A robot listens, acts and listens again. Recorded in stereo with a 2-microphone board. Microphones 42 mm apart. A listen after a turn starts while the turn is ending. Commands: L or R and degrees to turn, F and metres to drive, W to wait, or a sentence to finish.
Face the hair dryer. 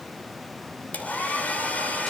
L35
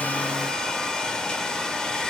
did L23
L15
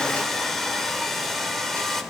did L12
Found it: a hair dryer, straight ahead, 2 to 4 m away.